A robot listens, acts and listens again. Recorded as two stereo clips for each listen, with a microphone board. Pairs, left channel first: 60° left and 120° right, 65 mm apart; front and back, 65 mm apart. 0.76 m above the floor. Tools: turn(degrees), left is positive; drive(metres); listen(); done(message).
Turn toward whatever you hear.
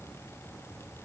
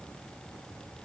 listen()
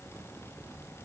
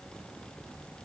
listen()
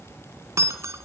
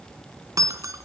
turn(degrees=-155)
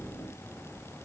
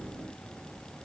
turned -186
turn(degrees=30)
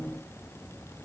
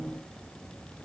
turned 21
turn(degrees=10)
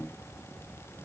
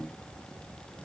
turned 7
done("Facing where the breaking glass came from. I can't hear it now.")